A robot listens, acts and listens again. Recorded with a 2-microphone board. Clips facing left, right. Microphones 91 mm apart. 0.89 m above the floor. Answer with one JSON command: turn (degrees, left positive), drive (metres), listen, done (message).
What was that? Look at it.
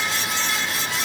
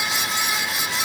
{"listen": true}
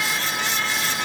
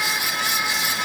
{"listen": true}
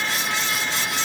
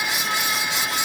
{"done": "I can't make out anything."}